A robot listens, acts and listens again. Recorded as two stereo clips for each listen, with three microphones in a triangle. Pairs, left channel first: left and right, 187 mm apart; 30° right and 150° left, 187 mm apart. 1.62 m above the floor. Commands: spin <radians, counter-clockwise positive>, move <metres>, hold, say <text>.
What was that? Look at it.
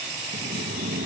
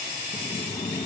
spin -1.66
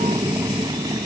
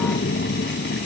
spin -0.35
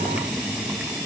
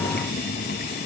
say Facing the boiling.